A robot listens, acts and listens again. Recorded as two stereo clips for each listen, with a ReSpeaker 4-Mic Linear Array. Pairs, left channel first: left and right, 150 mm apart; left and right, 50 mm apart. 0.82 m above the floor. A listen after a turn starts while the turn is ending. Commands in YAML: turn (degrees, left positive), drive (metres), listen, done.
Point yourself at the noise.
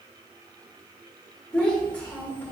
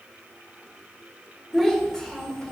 turn: 30
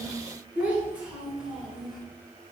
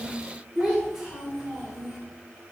done: "Facing the child speaking, 2 to 4 m away."